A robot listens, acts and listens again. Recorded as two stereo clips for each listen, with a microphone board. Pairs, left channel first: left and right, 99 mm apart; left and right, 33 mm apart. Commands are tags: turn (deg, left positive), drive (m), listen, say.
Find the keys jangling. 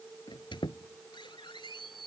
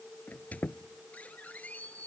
<listen/>
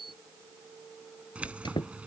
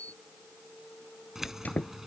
<turn deg="-30"/>
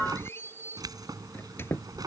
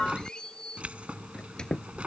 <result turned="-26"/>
<turn deg="-140"/>
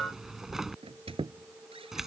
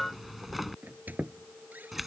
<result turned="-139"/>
<say>Facing the keys jangling.</say>